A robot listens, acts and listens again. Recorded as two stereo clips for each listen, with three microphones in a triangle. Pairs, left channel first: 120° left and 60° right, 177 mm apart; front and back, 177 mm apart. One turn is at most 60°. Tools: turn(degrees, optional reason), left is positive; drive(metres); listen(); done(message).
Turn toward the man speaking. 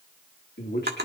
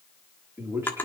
turn(degrees=60, reason="The man speaking: 105° left.")
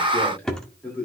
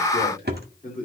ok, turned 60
turn(degrees=40, reason="The man speaking is now 40° left.")
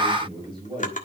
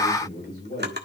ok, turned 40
done("Facing the man speaking.")